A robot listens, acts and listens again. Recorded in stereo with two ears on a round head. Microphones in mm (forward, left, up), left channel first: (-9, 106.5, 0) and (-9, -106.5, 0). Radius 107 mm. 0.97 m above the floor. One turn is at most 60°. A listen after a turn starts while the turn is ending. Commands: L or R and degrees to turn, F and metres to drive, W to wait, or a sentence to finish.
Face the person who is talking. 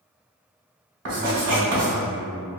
R15
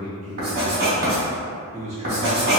R60
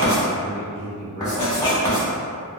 R60
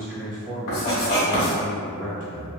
R40
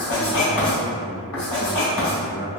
R10
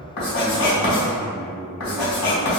Found it: a man speaking, straight ahead.